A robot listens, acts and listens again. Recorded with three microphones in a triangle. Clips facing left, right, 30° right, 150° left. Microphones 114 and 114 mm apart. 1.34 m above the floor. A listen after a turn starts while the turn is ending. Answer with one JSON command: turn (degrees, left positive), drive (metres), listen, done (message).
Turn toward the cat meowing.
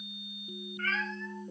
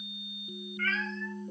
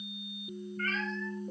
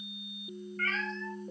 {"turn": 140}
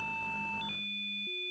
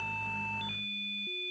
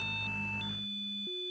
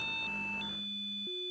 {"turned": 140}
{"listen": true}
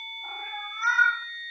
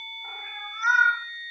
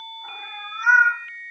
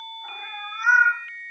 {"turn": 55}
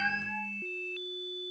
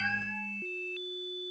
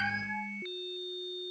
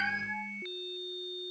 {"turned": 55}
{"listen": true}
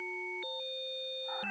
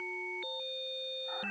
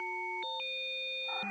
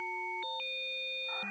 {"listen": true}
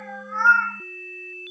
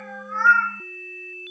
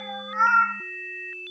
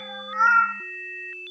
{"turn": 15}
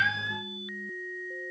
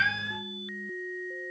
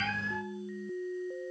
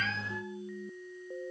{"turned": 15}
{"listen": true}
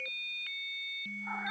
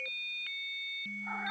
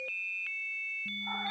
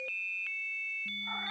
{"listen": true}
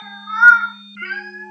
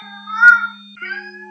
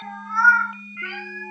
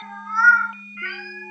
{"done": "Found it: a cat meowing, straight ahead."}